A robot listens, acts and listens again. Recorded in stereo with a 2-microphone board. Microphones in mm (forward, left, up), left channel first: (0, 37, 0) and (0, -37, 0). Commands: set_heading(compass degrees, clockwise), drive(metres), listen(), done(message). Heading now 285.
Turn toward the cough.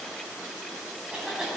set_heading(315)
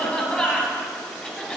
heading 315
set_heading(300)
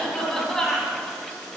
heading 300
done("Found it: a cough, straight ahead.")